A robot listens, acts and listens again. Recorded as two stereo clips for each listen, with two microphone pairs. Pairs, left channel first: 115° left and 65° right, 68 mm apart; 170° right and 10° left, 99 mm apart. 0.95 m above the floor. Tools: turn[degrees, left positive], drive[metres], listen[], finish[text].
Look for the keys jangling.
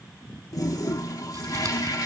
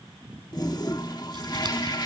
Action: listen[]
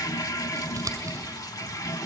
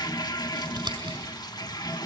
Action: listen[]
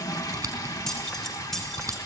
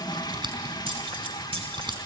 Thought: The keys jangling: 30° left.
Action: turn[30]
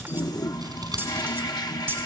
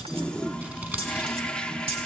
Action: finish[Found it: keys jangling, straight ahead, 2 to 4 m away.]